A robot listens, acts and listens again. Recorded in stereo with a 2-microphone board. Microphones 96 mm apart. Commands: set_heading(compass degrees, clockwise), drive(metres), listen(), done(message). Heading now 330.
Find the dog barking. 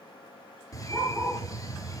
set_heading(0)
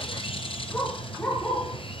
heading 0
set_heading(345)
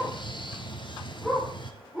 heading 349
set_heading(359)
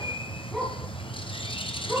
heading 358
done("Found it: a dog barking, straight ahead.")